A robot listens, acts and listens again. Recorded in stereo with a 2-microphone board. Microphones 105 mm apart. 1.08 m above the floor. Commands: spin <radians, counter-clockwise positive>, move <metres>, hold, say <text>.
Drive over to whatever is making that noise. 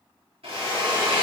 spin -1.31
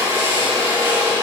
spin -0.52
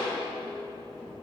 hold
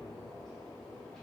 hold
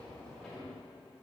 say Facing where the drill came from. I can't hear it now. I did not reach it.